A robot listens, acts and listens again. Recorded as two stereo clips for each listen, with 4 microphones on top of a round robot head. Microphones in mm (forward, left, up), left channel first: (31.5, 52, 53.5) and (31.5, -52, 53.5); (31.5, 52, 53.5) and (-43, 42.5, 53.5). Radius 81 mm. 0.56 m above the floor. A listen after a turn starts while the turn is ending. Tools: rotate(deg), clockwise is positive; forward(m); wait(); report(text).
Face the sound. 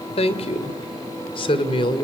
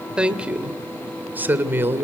rotate(-130)
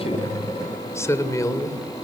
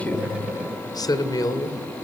rotate(-40)
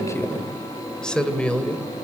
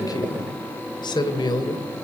rotate(-15)
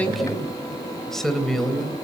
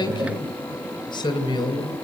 report("Facing the woman speaking.")